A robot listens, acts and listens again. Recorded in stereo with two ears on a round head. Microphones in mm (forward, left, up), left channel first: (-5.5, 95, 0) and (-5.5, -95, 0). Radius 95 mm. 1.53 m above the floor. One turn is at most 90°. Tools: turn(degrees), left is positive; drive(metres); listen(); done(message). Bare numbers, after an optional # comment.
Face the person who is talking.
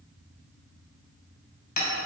listen()
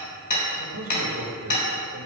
turn(-90)
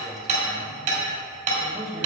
done("Found it: a man speaking, straight ahead, 2 to 4 m away.")